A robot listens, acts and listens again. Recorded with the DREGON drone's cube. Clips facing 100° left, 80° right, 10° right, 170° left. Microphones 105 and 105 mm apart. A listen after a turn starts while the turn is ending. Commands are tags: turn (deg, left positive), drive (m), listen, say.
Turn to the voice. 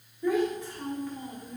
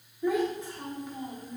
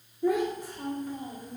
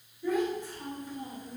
<turn deg="-10"/>
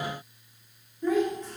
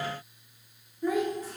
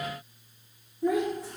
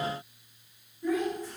<say>Found it: a child speaking, straight ahead.</say>